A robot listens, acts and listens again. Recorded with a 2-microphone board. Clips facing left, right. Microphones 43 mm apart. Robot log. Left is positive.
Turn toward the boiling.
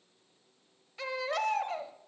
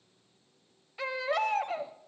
cmd idle
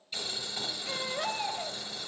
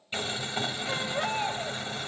note: The boiling: about 45° right or 135° right.
cmd yaw -45
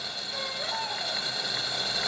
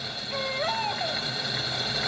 note: So it is at 10° right.
cmd yaw -10
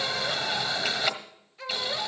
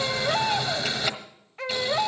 end: Found it: boiling, straight ahead.